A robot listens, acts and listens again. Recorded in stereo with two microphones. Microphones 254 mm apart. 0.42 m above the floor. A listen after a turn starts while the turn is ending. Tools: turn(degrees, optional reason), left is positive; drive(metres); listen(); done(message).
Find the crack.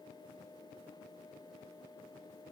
listen()
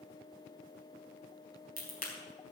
turn(degrees=35, reason="The crack: about 35° left or 145° left.")
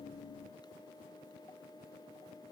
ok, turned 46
listen()
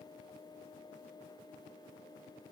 done("I heard a crack, but can't make it out now. It was about 10° right or 100° left.")